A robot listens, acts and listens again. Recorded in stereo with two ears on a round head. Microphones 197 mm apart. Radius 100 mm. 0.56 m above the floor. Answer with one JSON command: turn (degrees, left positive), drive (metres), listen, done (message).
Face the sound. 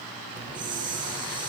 {"turn": -20}
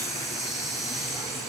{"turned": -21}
{"done": "Facing the hiss."}